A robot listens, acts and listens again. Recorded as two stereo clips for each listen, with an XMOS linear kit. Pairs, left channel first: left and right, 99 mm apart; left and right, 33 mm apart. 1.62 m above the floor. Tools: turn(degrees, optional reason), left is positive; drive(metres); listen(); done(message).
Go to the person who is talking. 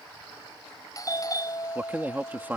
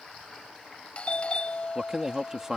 turn(degrees=-15, reason="The man speaking: about 15° right or 165° right.")
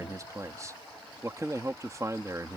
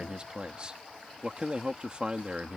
turn(degrees=-150, reason="So it is at 150° right.")
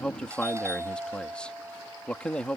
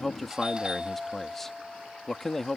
turn(degrees=10, reason="The man speaking is now 10° left.")
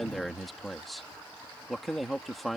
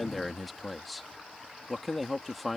drive(metres=1.0)
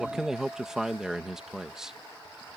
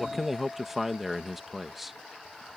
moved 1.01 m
drive(metres=1.0)
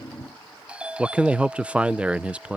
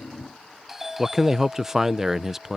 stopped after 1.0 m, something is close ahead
turn(degrees=-15, reason="The man speaking is now 15° right.")
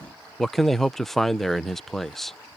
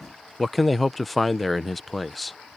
done("I am next to the man speaking.")